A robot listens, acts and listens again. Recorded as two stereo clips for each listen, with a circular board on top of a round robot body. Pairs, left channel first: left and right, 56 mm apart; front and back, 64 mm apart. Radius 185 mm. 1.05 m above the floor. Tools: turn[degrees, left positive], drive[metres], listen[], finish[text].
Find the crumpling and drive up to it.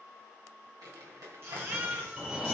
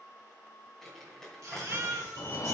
Thought: The crumpling: 85° right.
Action: turn[-85]
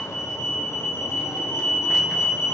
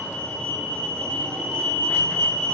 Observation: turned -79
Action: listen[]
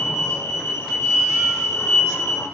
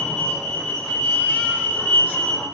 Action: listen[]
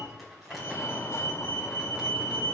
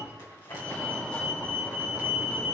Action: finish[Facing where the crumpling came from. I can't hear it now. I did not reach it.]